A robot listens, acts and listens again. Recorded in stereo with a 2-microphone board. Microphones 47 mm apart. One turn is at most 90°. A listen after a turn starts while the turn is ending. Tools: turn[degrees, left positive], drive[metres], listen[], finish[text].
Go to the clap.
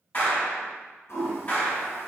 Thought: The clap: about 35° left or 145° left.
Action: turn[35]
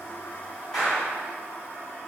Action: drive[1.0]
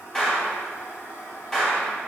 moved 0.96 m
Thought: The clap is now 10° left.
Action: turn[10]
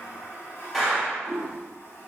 Action: drive[1.0]
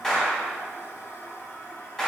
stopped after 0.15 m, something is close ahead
Thought: The clap is now 10° left.
Action: turn[10]
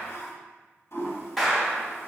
Action: finish[I am next to the clap.]